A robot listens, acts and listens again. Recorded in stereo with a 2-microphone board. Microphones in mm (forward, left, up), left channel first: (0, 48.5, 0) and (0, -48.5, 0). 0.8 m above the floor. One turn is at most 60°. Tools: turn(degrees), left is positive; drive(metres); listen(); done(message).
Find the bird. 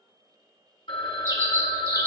turn(degrees=-35)
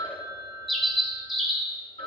done("Found it: a bird, straight ahead.")